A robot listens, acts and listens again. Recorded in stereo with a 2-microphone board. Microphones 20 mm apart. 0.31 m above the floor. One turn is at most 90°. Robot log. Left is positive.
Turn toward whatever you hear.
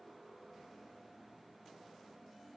cmd idle
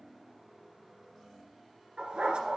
cmd yaw -90
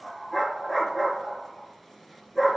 end: Found it: a dog barking, straight ahead, 2 to 4 m away.